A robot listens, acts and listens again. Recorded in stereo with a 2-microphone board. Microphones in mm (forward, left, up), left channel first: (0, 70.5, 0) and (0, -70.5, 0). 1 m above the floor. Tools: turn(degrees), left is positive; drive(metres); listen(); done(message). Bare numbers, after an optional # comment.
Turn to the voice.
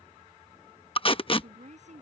# The woman speaking: about 55° right or 125° right.
turn(-55)
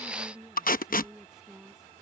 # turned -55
done("Facing the woman speaking.")